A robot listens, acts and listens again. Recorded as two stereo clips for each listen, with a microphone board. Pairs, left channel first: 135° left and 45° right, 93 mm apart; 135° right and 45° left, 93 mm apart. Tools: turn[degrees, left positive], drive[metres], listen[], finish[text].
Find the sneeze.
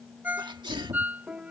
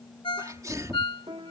Thought: The sneeze: 10° right.
Action: turn[-10]
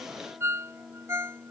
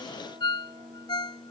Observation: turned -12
Action: finish[Facing where the sneeze came from. I can't hear it now.]